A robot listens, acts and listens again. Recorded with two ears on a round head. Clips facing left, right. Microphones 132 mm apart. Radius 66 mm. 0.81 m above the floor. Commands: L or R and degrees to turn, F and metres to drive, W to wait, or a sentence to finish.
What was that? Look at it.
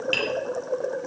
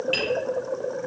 L40
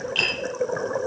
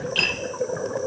Found it: tapping, straight ahead.